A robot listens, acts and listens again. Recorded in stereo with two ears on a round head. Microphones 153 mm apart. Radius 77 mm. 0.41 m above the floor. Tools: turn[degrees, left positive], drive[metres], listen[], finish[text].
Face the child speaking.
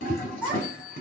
Action: turn[-30]
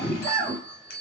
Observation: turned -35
Thought: So it is at 25° left.
Action: turn[25]
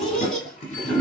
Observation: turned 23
Action: finish[Found it: a child speaking, straight ahead, 2 to 4 m away.]